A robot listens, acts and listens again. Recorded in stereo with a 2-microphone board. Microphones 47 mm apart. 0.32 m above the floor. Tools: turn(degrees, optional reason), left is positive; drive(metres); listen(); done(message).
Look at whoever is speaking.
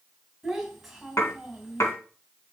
turn(degrees=-30)
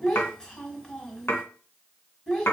turn(degrees=20, reason="So it is at 20° left.")
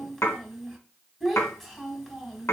done("Facing the child speaking.")